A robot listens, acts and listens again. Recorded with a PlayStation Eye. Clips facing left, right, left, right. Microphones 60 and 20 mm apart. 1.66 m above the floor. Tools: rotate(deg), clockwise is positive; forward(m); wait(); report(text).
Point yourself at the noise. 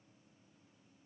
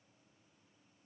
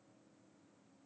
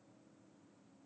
wait()
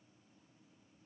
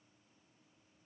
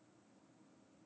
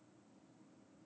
wait()
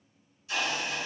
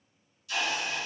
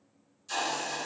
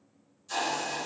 rotate(-25)
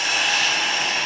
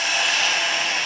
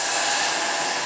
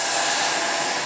report("Facing the hiss.")